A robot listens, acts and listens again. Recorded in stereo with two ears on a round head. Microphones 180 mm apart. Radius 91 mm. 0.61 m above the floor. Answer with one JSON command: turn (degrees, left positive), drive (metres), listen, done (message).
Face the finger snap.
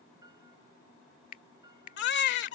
{"turn": 45}
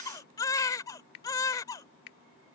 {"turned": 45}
{"turn": 85}
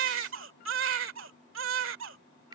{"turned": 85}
{"turn": -25}
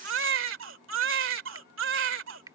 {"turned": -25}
{"turn": -20}
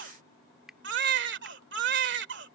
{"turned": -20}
{"done": "Facing the finger snap."}